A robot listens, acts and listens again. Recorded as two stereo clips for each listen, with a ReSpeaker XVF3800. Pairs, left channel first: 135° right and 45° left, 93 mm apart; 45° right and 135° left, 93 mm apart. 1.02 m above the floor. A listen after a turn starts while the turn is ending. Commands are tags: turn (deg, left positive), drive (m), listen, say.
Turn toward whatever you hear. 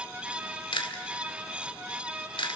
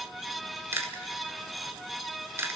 <turn deg="-160"/>
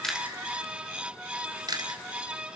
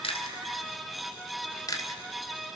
<say>Found it: chewing, straight ahead.</say>